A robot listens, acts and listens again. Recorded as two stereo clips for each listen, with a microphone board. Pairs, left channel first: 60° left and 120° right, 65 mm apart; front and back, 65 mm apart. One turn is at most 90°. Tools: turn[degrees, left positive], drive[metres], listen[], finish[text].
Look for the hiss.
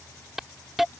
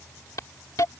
Thought: The hiss: 35° right.
Action: turn[-35]
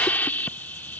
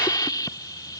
Action: finish[Facing the hiss.]